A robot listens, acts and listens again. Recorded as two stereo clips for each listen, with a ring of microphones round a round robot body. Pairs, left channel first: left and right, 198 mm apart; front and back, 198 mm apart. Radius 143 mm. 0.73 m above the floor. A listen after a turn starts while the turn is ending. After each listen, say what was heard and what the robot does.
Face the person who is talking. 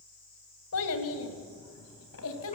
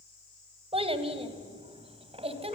The child speaking: 120° left. Turn 120° left.
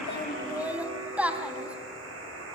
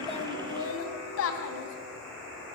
Facing the child speaking.